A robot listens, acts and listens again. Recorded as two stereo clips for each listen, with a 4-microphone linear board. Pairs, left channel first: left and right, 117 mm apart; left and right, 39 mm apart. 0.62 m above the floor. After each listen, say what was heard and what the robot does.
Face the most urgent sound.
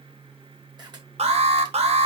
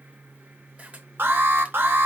The alarm: about 65° right or 115° right. Turn 65° right.
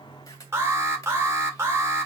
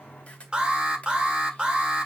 So it is at 25° right. Turn 25° right.
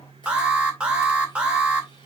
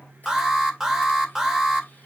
The alarm is now 10° right. Turn 10° right.
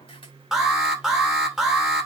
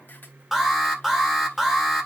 Found it: an alarm, straight ahead.